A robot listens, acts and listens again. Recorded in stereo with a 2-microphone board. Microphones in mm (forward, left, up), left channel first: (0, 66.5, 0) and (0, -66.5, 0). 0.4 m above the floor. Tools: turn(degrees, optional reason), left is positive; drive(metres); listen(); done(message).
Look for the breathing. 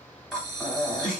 turn(degrees=30)
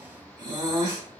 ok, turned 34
turn(degrees=-35, reason="So it is at 35° right.")
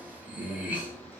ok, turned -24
turn(degrees=-10, reason="The breathing is now 10° right.")
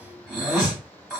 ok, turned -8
done("Facing the breathing.")